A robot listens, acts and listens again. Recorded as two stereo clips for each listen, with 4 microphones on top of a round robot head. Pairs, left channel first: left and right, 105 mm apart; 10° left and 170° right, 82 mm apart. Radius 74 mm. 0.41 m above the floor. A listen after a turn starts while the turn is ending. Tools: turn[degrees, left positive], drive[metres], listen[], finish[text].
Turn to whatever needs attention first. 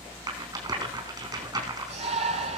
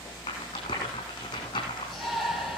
Thought: The shout: 80° right.
Action: turn[-80]
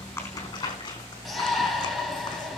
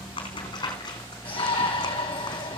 Action: finish[Found it: a shout, straight ahead, 2 to 4 m away.]